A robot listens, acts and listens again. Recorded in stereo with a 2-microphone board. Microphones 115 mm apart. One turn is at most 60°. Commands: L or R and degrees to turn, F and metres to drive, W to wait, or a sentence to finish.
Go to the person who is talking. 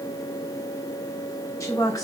L25
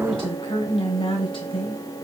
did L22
L60
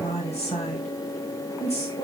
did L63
L60
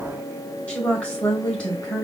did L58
L10
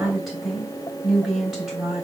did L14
F1.0
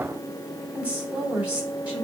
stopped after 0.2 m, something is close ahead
R10
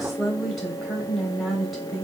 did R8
Something is in my way. I am facing the woman speaking but have not reached it.